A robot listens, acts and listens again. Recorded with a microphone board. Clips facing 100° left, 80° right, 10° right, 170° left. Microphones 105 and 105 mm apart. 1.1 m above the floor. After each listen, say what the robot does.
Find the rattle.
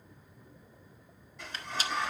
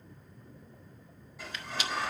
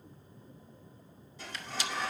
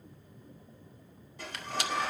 Turn 150° left.
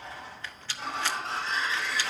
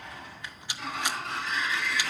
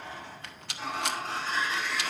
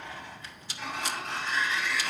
Facing the rattle.